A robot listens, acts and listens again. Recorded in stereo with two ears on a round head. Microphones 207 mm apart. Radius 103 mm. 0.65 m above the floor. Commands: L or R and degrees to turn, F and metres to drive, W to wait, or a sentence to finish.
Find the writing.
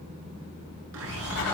L75
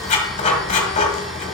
L30
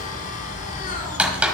Found it: writing, straight ahead, 1 to 2 m away.